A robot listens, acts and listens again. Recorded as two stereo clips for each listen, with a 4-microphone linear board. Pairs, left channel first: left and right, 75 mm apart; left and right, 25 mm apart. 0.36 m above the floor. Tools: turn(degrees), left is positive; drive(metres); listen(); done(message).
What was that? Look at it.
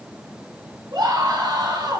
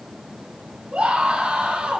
turn(degrees=-70)
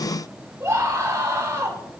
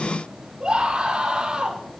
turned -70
turn(degrees=-40)
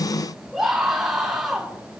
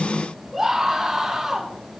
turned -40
done("Found it: a scream, straight ahead.")